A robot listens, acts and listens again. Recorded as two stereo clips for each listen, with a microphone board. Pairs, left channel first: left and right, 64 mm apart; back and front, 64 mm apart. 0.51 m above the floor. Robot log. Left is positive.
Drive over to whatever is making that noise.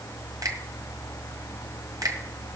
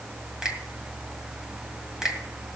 note: The finger snap: 80° right.
cmd yaw -80
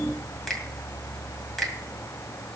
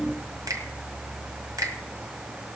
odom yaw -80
cmd fwd 1.0
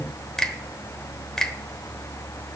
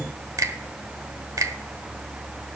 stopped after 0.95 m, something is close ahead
note: The finger snap is now 10° left.
cmd yaw +10
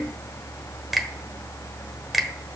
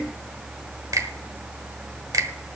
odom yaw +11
end: Arrived at the finger snap, straight ahead.